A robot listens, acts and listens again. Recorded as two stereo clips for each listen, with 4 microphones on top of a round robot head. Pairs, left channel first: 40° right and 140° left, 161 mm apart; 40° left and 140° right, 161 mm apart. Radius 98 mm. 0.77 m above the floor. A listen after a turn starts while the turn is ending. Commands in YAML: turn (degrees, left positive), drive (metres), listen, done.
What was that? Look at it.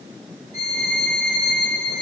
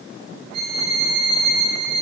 turn: -115
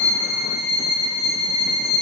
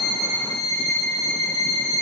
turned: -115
turn: -10
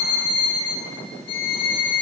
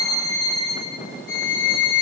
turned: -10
done: "Facing the violin, over 4 m away."